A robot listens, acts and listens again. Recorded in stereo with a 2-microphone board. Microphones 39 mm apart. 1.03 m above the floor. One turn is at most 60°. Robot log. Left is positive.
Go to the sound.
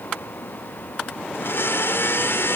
cmd yaw +60
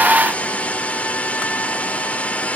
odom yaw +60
note: So it is at 40° left.
cmd yaw +40
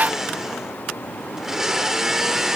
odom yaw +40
note: The blender is now 10° right.
cmd yaw -10
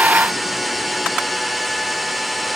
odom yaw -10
cmd fwd 1.0
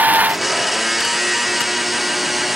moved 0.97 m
cmd fwd 1.0
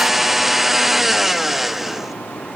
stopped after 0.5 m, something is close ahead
end: Arrived at the blender, straight ahead.